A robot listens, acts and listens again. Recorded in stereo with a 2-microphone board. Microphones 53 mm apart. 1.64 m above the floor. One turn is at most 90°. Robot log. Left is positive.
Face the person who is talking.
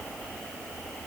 cmd idle
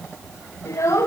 note: The child speaking: about 70° left or 110° left.
cmd yaw +70
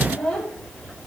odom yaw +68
end: Found it: a child speaking, straight ahead.